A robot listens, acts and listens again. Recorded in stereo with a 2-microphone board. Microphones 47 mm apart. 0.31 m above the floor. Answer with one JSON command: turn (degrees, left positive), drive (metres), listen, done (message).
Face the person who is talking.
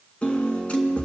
{"listen": true}
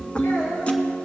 {"turn": 90}
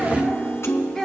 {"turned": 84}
{"done": "Facing the child speaking, 2 to 4 m away."}